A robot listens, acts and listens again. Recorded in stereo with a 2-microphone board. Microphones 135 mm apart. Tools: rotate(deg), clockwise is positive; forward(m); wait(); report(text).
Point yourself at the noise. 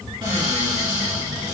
rotate(35)
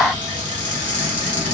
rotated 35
rotate(110)
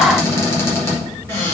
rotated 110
rotate(-20)
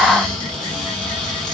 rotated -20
rotate(-10)
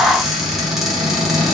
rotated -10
report("Found it: a cupboard door, straight ahead.")